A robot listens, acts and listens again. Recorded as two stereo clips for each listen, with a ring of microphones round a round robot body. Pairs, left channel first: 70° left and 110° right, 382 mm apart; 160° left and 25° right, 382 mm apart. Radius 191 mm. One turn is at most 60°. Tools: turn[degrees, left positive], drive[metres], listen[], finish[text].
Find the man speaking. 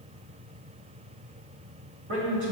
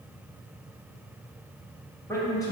Thought: The man speaking: 125° right.
Action: turn[-60]
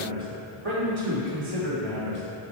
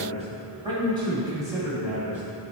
Thought: The man speaking is now 110° right.
Action: turn[-60]
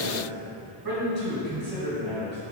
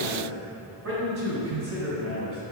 Thought: The man speaking is now 50° right.
Action: turn[-50]
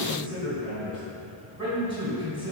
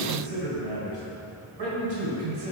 Thought: The man speaking is now 10° right.
Action: turn[-10]
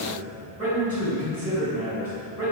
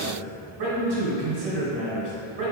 Action: finish[Found it: a man speaking, straight ahead.]